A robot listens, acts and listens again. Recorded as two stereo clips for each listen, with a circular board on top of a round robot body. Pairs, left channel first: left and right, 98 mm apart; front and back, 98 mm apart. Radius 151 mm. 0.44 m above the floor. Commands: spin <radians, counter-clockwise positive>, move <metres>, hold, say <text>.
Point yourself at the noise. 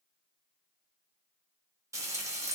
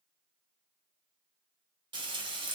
spin -2.53
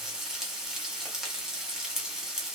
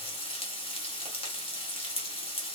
say Facing the frying.